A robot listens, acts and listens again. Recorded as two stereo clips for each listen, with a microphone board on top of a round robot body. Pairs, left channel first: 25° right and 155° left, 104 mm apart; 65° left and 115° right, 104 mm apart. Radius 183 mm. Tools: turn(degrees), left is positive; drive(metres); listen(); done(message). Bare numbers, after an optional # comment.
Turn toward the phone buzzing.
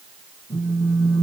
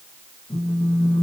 # The phone buzzing: 30° left.
turn(30)
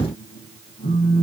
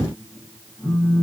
# The phone buzzing is now 10° right.
turn(-10)
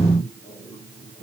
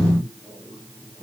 done("Found it: a phone buzzing, straight ahead, 2 to 4 m away.")